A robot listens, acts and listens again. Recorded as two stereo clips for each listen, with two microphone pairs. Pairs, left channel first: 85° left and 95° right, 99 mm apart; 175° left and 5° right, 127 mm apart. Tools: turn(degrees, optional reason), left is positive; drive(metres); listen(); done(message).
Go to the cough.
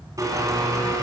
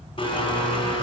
listen()
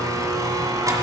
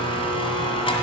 listen()
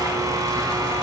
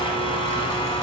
done("I can't make out a cough to turn to.")